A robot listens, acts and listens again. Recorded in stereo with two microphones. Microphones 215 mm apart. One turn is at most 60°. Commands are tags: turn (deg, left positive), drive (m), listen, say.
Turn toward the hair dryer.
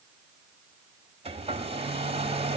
<turn deg="-25"/>
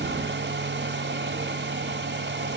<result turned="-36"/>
<turn deg="-60"/>
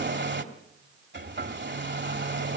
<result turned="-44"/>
<turn deg="-60"/>
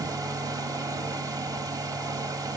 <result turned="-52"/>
<turn deg="-20"/>
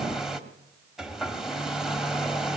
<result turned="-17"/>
<say>Facing the hair dryer, 1 to 2 m away.</say>